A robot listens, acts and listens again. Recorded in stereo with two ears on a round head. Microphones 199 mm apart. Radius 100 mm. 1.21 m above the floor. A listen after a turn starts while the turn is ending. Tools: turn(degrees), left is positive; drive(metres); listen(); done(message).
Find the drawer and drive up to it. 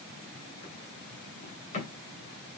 turn(degrees=35)
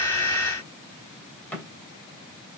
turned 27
drive(metres=1.0)
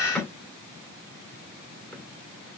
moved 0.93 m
drive(metres=1.0)
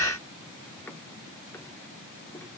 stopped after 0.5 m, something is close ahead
turn(degrees=15)
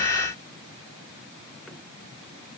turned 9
listen()
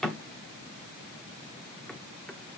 done("Arrived at the drawer, straight ahead.")